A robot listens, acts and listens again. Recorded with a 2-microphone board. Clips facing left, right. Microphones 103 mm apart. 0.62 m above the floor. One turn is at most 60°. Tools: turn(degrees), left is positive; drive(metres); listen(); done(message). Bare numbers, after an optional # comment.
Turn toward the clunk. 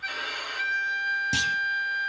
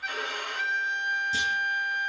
turn(60)
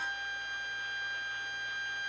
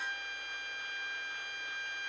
# Nothing new. It was at 30° left.
turn(30)
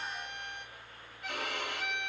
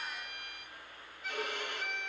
done("Facing where the clunk came from. I can't hear it now.")